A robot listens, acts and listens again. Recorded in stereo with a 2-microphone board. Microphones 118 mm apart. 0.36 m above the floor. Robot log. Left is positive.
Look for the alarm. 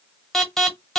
cmd yaw +30
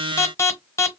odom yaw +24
note: So it is at 150° left.
cmd yaw +150
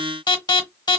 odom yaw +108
note: The alarm is now 40° left.
cmd yaw +40
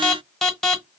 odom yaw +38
end: Facing the alarm, 1 to 2 m away.